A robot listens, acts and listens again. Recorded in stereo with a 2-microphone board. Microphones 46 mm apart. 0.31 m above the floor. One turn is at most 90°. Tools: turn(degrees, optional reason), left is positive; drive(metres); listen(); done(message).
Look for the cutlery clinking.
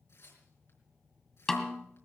listen()
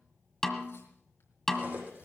turn(degrees=-35, reason="The cutlery clinking: about 35° right or 145° right.")
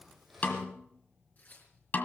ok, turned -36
done("Facing the cutlery clinking, over 4 m away.")